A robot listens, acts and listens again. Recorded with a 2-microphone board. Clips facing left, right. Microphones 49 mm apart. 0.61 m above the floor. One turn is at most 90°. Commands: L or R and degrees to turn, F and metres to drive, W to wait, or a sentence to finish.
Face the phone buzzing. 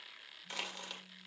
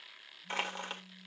R70
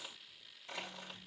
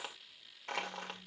W
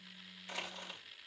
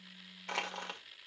R35
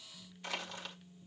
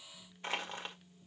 Found it: a phone buzzing, straight ahead, under 1 m away.